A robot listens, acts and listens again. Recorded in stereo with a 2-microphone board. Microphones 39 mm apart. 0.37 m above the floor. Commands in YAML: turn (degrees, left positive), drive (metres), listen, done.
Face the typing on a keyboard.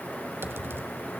turn: -70
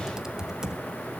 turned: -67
turn: -10
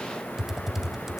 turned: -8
done: "Facing the typing on a keyboard, 1 to 2 m away."